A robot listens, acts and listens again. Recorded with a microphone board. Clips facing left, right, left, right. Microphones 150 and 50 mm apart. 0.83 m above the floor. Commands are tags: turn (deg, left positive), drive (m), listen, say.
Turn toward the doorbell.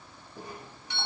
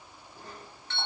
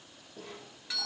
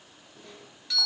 <turn deg="30"/>
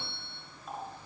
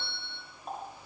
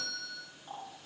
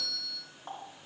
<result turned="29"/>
<turn deg="135"/>
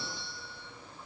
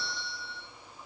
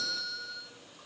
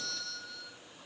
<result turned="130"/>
<say>Facing the doorbell.</say>